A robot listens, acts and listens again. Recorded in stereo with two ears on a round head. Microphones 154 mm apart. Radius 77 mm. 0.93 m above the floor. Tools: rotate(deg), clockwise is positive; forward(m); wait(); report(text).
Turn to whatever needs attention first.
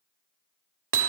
wait()
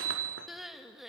rotate(-30)
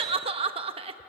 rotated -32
rotate(35)
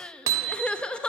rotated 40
report("Facing the crying.")